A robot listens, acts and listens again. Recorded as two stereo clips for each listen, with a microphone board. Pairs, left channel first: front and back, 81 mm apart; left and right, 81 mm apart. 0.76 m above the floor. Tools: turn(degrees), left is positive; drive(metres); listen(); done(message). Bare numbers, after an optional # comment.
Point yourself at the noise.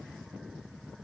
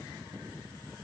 listen()
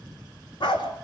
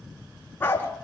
# The dog barking: 20° left.
turn(20)
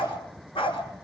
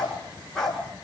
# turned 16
done("Found it: a dog barking, straight ahead.")